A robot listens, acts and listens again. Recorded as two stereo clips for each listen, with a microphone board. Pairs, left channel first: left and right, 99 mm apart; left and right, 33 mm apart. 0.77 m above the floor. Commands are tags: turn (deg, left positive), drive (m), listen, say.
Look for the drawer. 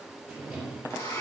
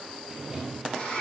<turn deg="-30"/>
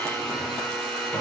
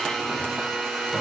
<turn deg="25"/>
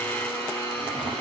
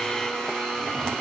<listen/>
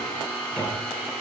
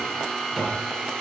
<turn deg="10"/>
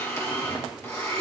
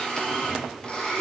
<listen/>
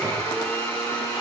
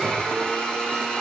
<listen/>
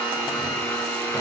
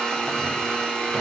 <say>Facing where the drawer came from. I can't hear it now.</say>